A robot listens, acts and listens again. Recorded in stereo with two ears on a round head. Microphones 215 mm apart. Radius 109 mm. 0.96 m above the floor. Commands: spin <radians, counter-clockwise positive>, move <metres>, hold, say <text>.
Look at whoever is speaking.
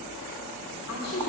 spin 1.13
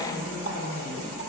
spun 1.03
spin 0.17
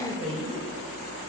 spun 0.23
say Found it: a woman speaking, straight ahead, 2 to 4 m away.